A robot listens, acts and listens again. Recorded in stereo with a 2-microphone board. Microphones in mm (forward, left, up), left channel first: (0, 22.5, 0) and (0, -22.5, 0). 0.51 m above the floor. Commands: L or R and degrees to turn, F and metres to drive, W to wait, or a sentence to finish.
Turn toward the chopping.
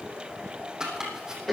R30
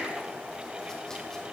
W
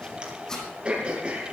L15
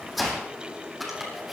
Found it: chopping, straight ahead, over 4 m away.